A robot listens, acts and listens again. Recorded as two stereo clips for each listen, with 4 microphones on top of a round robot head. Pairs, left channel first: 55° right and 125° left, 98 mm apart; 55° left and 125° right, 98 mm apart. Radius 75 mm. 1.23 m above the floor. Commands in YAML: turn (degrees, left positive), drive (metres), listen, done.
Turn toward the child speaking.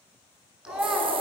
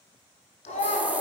turn: 45
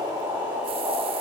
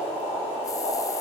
listen: true
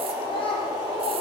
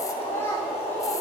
turn: -15
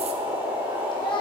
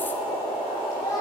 turn: -10
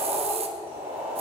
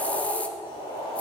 listen: true
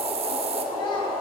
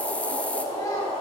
listen: true
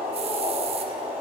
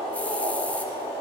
done: "Facing where the child speaking came from. I can't hear it now."